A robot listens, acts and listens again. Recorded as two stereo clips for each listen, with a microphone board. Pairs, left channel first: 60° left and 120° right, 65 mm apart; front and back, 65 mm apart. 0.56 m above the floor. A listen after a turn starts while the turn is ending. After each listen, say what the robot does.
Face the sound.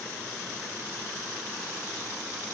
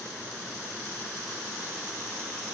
Keep listening.
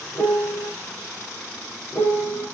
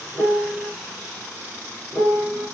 Turn 90° left.
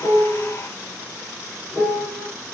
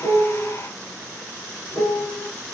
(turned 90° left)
Turn 45° right.
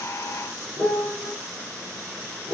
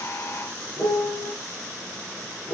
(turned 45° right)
Turn 20° right.
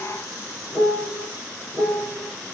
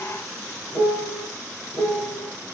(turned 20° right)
Turn 10° right.
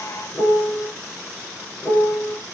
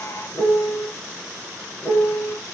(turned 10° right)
Found it: a piano, straight ahead, 2 to 4 m away.